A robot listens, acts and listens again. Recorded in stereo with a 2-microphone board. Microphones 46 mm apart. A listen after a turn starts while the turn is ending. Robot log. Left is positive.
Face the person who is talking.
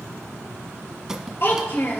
note: The child speaking: about 50° left or 130° left.
cmd yaw +50
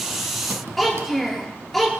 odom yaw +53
end: Facing the child speaking.